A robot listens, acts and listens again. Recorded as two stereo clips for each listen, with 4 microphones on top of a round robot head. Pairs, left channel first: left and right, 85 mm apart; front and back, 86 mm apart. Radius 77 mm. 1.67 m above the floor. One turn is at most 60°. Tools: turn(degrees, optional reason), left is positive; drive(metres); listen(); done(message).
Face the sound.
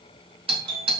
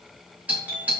turn(degrees=-60, reason="The doorbell: 105° right.")
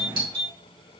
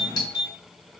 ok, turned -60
turn(degrees=-55, reason="The doorbell is now 55° right.")
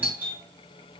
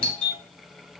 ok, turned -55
turn(degrees=-15, reason="The doorbell is now 15° right.")
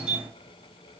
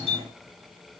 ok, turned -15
done("Found it: a doorbell, straight ahead, 2 to 4 m away.")